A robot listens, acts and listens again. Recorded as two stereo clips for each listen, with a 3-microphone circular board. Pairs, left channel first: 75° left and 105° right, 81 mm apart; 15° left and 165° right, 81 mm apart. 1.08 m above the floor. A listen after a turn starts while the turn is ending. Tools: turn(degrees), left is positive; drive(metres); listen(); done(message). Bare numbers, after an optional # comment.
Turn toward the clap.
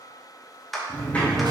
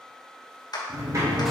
# The clap: 15° right.
turn(-15)
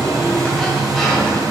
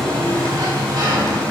listen()
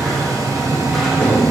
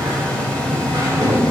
listen()
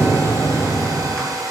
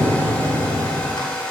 done("Facing where the clap came from. I can't hear it now.")